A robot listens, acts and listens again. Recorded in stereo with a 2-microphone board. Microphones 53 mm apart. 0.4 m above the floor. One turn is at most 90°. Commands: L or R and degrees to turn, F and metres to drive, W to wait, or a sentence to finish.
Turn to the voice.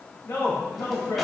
L50
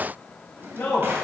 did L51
L65
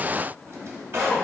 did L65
Facing the man speaking.